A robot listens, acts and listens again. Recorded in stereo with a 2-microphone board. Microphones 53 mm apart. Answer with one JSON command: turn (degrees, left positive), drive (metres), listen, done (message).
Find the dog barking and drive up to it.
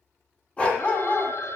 {"turn": 25}
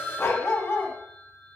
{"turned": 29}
{"turn": 130}
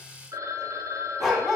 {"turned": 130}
{"drive": 1.0}
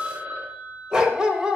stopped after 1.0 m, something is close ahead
{"turn": -15}
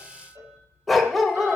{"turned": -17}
{"done": "Arrived at the dog barking, straight ahead."}